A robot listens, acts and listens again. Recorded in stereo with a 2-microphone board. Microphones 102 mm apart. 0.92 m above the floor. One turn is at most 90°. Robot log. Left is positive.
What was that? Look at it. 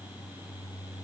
cmd idle
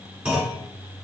cmd yaw -30
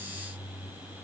cmd idle
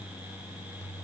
end: I heard a clunk, but can't make it out now. It was about 20° left or 140° right.